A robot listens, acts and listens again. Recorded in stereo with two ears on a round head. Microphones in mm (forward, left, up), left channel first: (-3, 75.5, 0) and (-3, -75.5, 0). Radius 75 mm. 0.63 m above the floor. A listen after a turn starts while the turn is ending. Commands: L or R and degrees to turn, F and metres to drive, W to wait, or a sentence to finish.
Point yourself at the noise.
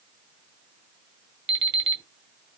R30
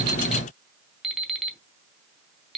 Found it: an alarm clock, straight ahead, under 1 m away.